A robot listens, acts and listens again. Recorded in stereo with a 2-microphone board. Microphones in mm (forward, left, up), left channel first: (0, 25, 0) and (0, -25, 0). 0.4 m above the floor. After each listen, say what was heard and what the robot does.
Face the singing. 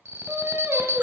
The singing: about 65° right or 115° right. Turn 65° right.
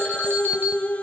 So it is at 30° left. Turn 30° left.
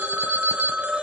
Keep listening.
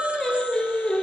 The singing is now 20° left. Turn 20° left.
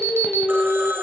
Found it: singing, straight ahead, 2 to 4 m away.